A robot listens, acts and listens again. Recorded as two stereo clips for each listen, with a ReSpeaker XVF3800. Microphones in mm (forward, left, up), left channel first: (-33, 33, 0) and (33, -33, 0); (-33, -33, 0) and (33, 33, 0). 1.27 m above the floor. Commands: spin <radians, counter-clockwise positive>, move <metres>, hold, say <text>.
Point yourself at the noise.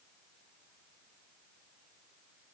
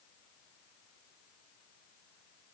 hold
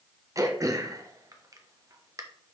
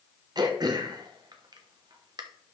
say Facing the throat clearing.